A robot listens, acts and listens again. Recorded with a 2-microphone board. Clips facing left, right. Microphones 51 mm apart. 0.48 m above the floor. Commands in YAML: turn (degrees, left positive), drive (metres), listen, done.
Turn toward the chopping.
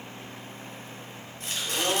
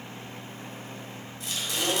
turn: 45
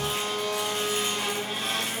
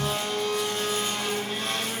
listen: true
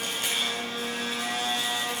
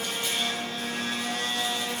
listen: true
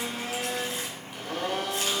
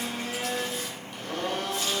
done: "I heard chopping, but can't make it out now. It was about straight ahead or 90° left."